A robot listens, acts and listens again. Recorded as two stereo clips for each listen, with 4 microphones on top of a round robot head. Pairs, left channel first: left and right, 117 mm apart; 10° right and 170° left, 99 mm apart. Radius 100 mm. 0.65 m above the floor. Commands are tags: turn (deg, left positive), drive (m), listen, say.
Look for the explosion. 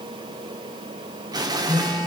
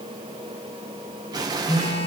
<turn deg="-140"/>
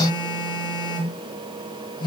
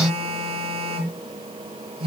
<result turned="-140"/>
<say>I heard an explosion from this way, but can't make it out now.</say>